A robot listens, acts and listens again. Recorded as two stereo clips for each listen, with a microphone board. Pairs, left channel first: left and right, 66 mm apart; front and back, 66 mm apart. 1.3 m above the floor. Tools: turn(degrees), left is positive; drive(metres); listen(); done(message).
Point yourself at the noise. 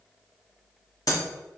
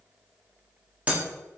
turn(degrees=110)
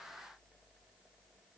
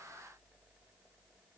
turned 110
done("Facing where the breaking glass came from. I can't hear it now.")